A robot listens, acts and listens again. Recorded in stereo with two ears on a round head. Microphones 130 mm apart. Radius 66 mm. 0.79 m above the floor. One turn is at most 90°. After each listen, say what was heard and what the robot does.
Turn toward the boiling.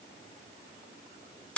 Keep listening.
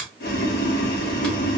Turn 90° left.
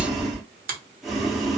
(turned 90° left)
Found it: boiling, straight ahead.